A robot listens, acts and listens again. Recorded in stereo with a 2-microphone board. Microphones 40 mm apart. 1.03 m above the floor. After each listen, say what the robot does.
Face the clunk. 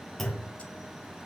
Turn 30° left.
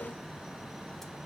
Keep listening.
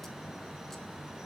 I heard a clunk, but can't make it out now. It was about 20° right or 140° left.